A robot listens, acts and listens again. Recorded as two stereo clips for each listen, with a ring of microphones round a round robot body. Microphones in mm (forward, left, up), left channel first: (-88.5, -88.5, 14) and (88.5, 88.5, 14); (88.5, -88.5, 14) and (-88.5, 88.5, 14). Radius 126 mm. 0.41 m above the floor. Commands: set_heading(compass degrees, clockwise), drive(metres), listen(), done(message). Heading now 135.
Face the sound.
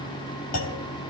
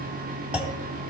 set_heading(275)
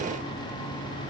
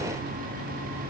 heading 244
set_heading(274)
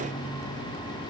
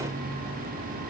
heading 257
set_heading(277)
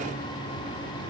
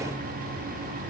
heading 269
done("I heard a clunk from this way, but can't make it out now.")